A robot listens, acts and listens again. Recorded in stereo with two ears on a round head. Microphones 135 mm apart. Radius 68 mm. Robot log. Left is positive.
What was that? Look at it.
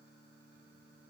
cmd idle
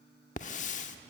note: The hiss: about 50° left or 130° left.
cmd yaw +50
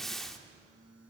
end: Found it: a hiss, straight ahead.